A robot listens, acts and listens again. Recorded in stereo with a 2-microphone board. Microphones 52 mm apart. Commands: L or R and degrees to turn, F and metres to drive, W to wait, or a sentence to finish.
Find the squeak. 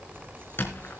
L45
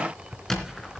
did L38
Found it: a squeak, straight ahead, 2 to 4 m away.